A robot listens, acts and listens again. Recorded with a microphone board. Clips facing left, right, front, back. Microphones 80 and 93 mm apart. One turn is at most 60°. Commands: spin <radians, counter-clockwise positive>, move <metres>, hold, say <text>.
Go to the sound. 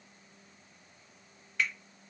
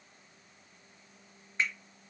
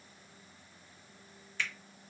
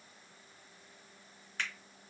spin -1.05
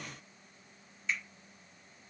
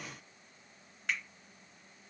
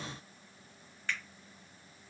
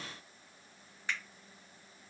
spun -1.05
spin -1.05
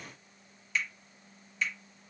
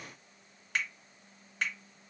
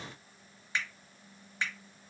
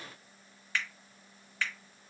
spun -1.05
spin -1.05
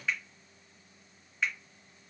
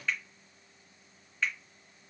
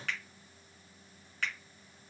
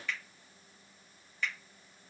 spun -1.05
move 1.0
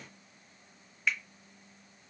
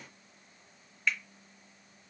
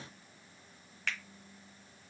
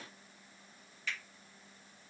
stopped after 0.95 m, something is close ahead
say Arrived at the finger snap, straight ahead.